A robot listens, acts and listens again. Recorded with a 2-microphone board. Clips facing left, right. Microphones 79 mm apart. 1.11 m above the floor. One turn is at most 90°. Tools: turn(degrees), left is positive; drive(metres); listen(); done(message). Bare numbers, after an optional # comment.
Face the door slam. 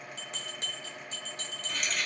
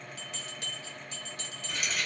listen()
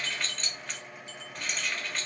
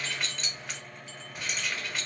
listen()
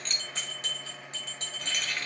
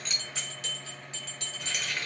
done("I can't make out a door slam, only a bell and keys jangling.")